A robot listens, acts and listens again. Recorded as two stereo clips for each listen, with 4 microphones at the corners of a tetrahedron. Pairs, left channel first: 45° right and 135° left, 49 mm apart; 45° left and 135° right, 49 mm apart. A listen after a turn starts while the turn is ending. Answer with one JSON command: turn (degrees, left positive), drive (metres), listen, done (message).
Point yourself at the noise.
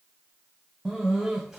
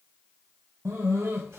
{"turn": -150}
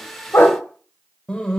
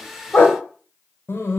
{"turn": 25}
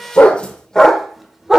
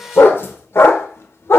{"turn": 55}
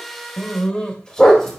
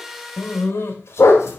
{"turn": 35}
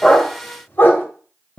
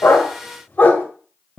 {"done": "Found it: a dog barking, straight ahead, 1 to 2 m away."}